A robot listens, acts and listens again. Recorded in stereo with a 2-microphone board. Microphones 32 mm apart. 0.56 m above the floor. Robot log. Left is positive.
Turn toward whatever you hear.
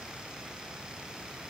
cmd idle
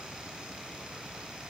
cmd idle
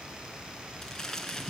note: The crumpling: about 15° left or 165° left.
cmd yaw +15
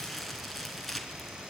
end: Facing the crumpling.